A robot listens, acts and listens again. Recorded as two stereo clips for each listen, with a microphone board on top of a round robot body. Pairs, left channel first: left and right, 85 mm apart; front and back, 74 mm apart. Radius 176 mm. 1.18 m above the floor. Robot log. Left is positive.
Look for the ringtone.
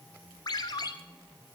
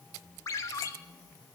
note: The ringtone: 45° left.
cmd yaw +45
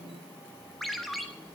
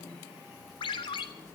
end: Facing the ringtone.